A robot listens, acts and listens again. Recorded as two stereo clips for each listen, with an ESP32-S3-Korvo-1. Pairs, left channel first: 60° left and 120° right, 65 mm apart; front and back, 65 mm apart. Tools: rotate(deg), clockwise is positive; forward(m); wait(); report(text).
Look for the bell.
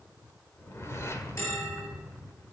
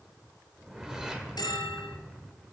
rotate(-15)
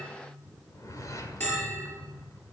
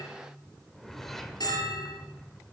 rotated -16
report("Facing the bell.")